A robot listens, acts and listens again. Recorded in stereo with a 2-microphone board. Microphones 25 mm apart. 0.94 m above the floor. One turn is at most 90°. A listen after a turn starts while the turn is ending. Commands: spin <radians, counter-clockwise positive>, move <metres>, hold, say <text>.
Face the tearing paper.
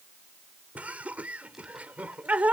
hold
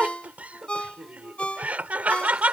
hold
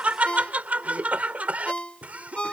say I can't make out tearing paper, only laughter and a ringtone.